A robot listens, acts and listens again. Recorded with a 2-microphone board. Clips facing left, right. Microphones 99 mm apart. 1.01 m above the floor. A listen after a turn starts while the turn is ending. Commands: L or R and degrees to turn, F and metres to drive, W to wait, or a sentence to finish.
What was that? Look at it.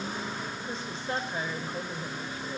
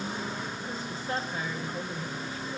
L25
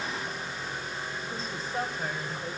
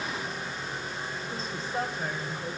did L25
Found it: a woman speaking, straight ahead, over 4 m away.